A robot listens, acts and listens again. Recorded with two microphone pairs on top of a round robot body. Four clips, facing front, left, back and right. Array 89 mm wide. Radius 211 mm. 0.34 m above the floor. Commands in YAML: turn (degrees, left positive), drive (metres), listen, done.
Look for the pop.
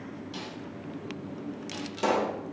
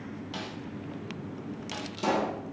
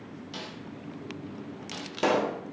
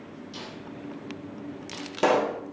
turn: -110
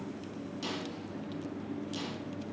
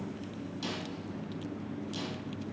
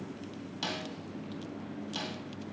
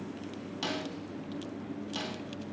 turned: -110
done: "Facing where the pop came from. I can't hear it now."